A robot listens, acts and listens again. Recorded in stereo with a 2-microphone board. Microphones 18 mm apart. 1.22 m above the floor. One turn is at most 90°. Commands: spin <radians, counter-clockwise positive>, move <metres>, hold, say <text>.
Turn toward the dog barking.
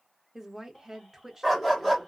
spin 0.52
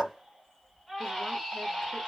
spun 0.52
spin -0.35
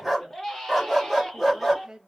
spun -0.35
say Facing the dog barking.